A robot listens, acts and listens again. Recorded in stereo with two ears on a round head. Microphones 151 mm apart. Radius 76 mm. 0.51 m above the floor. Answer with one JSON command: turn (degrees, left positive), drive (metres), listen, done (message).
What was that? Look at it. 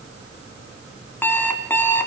{"turn": 30}
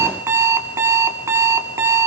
{"turn": -15}
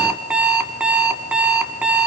{"done": "Facing the alarm clock, 2 to 4 m away."}